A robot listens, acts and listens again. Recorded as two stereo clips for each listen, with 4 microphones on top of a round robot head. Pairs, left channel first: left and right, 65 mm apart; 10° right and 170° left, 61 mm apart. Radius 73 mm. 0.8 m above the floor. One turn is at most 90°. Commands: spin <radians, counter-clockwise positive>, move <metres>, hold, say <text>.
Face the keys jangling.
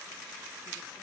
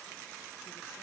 hold
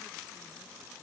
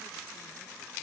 hold
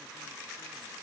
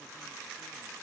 say I can't make out keys jangling.